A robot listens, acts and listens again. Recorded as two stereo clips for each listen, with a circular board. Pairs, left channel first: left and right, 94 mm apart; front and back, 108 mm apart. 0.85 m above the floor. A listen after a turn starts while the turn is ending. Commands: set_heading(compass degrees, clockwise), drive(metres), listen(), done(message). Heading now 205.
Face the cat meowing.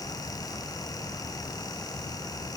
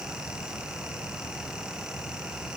listen()
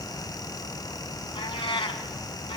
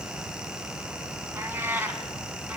set_heading(95)
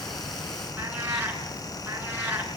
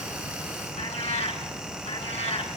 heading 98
set_heading(118)
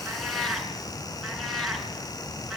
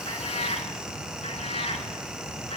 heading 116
done("Facing the cat meowing, 2 to 4 m away.")